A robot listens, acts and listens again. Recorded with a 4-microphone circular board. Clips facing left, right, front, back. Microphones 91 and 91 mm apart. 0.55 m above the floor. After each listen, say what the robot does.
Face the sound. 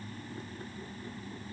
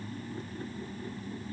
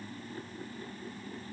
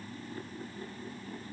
Keep listening.
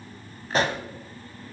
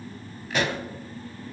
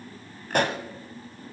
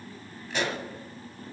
Turn 35° left.
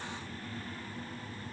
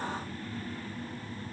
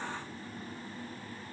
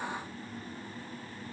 I heard a pop from this way, but can't make it out now.